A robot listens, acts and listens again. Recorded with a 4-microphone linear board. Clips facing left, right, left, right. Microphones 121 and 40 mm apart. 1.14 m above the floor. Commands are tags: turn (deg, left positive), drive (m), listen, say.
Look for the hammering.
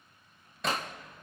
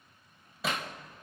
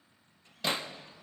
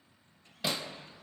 <turn deg="-30"/>
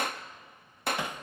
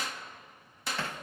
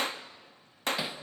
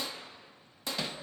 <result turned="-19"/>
<turn deg="15"/>
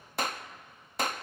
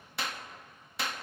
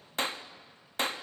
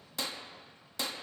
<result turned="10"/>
<listen/>
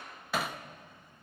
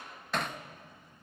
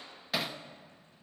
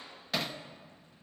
<say>Found it: hammering, straight ahead.</say>